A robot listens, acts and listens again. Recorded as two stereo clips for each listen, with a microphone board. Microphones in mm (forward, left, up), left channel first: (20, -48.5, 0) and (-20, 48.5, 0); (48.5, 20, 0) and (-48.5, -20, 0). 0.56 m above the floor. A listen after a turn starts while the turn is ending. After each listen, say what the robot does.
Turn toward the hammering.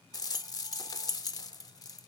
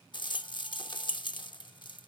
Keep listening.
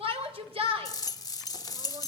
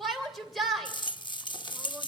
Keep listening.
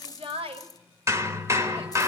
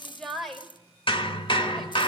Turn 50° left.
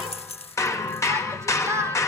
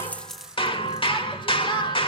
Found it: hammering, straight ahead, 1 to 2 m away.